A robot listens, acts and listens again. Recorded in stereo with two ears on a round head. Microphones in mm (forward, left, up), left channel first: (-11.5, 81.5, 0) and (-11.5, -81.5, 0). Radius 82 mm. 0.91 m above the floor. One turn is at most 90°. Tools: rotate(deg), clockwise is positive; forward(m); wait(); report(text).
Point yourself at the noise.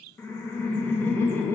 rotate(-30)
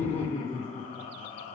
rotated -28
rotate(-90)
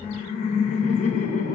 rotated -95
rotate(-40)
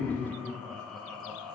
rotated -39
report("Found it: laughter, straight ahead.")